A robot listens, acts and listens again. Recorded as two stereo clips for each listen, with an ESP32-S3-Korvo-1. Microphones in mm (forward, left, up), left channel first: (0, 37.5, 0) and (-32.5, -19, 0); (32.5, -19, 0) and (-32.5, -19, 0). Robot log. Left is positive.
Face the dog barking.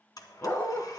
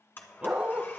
note: The dog barking: 115° left.
cmd yaw +115
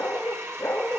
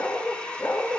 note: The dog barking is now 25° left.
cmd yaw +25
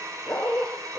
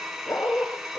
note: The dog barking is now 10° left.
cmd yaw +10
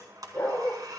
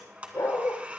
end: Found it: a dog barking, straight ahead, over 4 m away.